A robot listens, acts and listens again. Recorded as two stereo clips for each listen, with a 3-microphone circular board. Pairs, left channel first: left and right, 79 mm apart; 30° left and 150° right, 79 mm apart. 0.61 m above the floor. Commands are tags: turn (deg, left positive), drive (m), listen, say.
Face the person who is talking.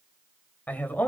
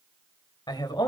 <turn deg="25"/>
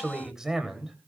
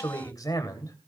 <say>Facing the man speaking, 2 to 4 m away.</say>